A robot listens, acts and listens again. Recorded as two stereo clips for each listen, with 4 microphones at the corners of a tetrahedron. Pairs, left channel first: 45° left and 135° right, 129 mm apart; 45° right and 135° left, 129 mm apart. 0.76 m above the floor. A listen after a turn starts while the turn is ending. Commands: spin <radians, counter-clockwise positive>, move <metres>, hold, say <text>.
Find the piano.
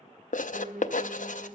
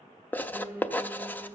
spin -2.71
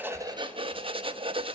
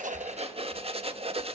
hold
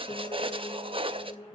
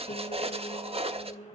spin -0.17
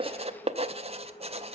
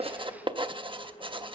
hold
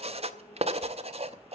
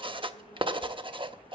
hold
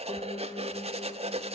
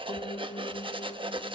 say Facing the piano, 1 to 2 m away.